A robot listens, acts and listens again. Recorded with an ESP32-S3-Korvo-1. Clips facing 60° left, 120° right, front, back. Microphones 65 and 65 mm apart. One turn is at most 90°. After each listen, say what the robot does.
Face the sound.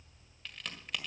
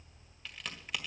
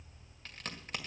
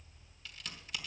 Turn 35° right.
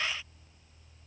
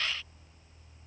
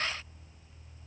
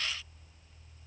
I heard a crack from this way, but can't make it out now.